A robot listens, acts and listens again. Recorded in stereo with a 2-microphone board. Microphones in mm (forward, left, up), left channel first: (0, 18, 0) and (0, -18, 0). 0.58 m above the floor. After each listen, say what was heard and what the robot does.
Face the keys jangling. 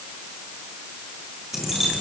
Turn 30° right.
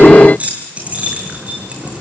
So it is at 145° right. Turn 145° right.
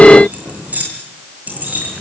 The keys jangling is now 45° right. Turn 45° right.
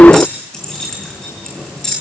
The keys jangling is now 15° left. Turn 15° left.
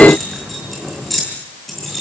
Facing the keys jangling.